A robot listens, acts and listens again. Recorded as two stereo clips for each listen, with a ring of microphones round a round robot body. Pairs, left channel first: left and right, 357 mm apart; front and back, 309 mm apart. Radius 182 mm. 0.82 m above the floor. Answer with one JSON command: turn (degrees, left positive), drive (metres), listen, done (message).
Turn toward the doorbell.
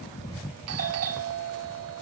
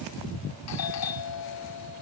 {"turn": -40}
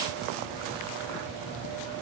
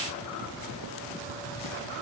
{"listen": true}
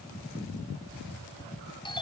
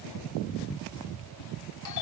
{"turn": 15}
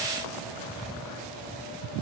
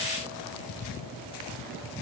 {"listen": true}
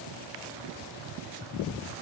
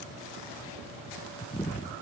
{"listen": true}
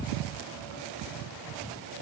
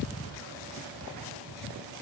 {"done": "I heard a doorbell from this way, but can't make it out now."}